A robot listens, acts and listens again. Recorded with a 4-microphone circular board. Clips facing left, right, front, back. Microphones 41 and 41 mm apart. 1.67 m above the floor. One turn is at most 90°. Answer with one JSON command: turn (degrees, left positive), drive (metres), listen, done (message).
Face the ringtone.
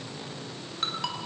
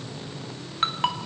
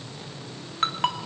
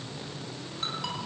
{"turn": -35}
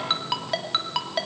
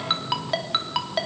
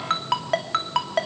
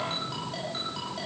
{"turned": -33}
{"done": "Found it: a ringtone, straight ahead."}